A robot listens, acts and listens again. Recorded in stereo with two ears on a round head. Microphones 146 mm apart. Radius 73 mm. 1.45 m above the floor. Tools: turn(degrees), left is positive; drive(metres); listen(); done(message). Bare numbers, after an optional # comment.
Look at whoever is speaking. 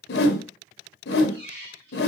listen()
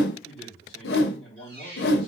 turn(30)
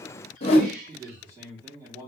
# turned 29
# So it is at 25° right.
turn(-25)
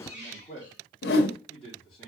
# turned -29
done("Facing the man speaking.")